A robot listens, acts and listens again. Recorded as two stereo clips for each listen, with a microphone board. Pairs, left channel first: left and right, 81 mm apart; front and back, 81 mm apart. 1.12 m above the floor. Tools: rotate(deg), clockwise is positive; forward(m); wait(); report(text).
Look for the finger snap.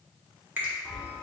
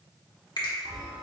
rotate(25)
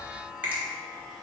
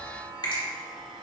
rotate(25)
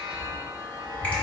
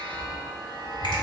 wait()
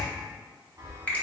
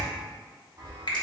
rotate(-15)
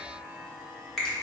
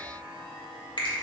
report("Facing the finger snap.")